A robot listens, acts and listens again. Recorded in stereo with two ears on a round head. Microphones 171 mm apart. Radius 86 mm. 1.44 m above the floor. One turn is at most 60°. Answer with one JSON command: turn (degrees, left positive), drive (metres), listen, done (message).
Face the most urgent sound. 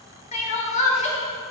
{"turn": 35}
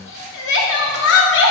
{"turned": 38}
{"turn": 60}
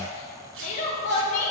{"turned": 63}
{"turn": 40}
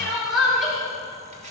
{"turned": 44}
{"done": "Facing the crying."}